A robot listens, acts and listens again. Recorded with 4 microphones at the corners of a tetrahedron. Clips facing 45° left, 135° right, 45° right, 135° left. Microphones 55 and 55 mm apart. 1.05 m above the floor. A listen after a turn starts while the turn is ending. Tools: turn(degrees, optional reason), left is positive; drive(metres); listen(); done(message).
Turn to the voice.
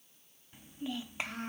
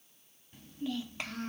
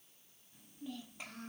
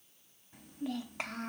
turn(degrees=115, reason="The child speaking: 115° left.")
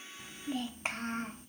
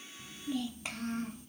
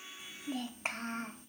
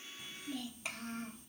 done("Found it: a child speaking, straight ahead, 1 to 2 m away.")